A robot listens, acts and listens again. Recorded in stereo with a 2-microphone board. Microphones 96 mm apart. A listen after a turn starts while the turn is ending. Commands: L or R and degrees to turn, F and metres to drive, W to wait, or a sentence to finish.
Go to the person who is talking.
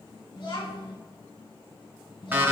L60
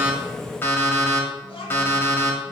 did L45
L75
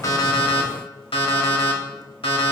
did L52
L25
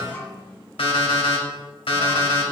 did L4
L20
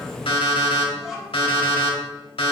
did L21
F1.0
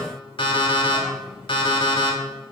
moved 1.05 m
W
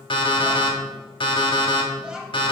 R10
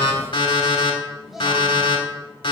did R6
F1.0
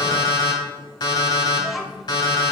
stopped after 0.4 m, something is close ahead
I am next to the child speaking.